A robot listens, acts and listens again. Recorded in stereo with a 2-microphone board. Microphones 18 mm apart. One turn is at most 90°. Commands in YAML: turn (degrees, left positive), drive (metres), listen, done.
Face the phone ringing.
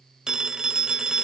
turn: -35
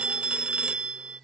turn: -90
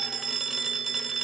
turn: -10
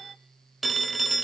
done: "Found it: a phone ringing, straight ahead, 1 to 2 m away."